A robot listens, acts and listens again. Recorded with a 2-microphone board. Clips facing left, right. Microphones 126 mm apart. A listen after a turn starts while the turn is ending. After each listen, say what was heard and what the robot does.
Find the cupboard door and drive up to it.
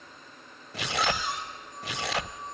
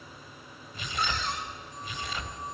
Turn 30° left.
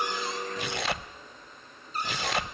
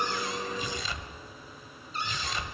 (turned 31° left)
So it is at 135° left. Turn 135° left.
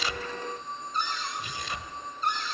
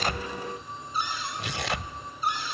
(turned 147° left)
The cupboard door is now 10° right. Turn 10° right.
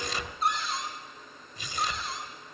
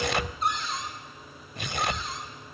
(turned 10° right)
Drive 1.0 m forward.
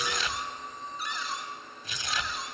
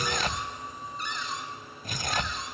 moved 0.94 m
Drive 1.0 m forward.
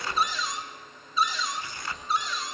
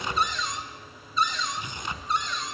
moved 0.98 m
Drive 1.0 m forward.
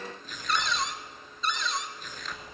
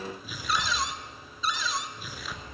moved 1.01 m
Drive 1.0 m forward.
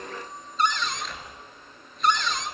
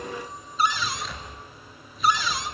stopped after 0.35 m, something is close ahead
The cupboard door is now 10° right. Turn 10° right.
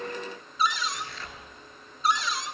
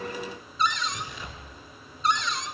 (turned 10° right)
Arrived at the cupboard door, straight ahead.